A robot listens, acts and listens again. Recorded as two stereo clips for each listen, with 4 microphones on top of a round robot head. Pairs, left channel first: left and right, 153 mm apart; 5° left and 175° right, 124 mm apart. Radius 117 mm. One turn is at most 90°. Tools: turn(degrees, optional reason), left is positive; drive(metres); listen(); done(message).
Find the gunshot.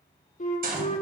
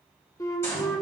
turn(degrees=-65, reason="The gunshot: 65° right.")
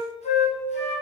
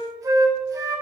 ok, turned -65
done("Facing where the gunshot came from. I can't hear it now.")